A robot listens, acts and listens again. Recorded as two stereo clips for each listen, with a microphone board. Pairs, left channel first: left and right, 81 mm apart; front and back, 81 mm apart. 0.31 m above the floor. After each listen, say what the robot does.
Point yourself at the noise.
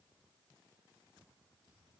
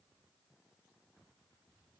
Keep listening.
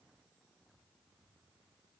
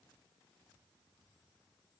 Keep listening.
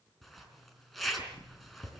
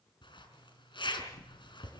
Facing the zipper.